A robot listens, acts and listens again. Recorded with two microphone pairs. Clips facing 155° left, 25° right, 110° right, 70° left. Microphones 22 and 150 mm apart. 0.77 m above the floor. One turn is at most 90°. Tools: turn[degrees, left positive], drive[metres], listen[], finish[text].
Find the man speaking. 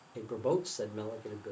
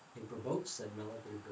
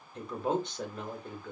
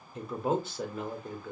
Thought: The man speaking: 155° left.
Action: turn[90]
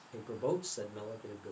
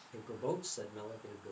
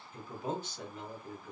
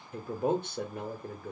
Thought: The man speaking is now 80° left.
Action: turn[80]
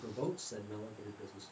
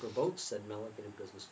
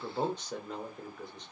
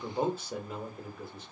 Thought: The man speaking is now 15° right.
Action: turn[-15]
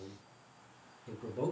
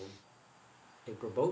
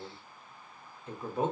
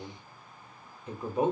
Action: finish[Found it: a man speaking, straight ahead, under 1 m away.]